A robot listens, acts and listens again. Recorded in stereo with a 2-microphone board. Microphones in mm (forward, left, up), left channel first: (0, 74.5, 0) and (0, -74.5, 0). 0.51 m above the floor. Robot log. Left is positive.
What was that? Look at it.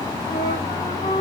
note: The flute: about 40° left or 140° left.
cmd yaw +40
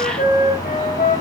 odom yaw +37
note: So it is at 105° left.
cmd yaw +105
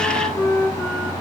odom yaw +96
note: The flute is now 10° left.
cmd yaw +10
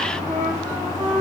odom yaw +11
end: Facing the flute.